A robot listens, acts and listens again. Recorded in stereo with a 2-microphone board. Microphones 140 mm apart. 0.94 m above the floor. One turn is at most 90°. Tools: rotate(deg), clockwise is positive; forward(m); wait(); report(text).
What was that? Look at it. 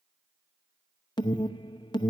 rotate(-30)
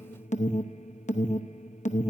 rotate(-90)
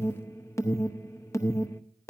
rotate(-20)
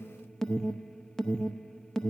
report("Facing the alarm, under 1 m away.")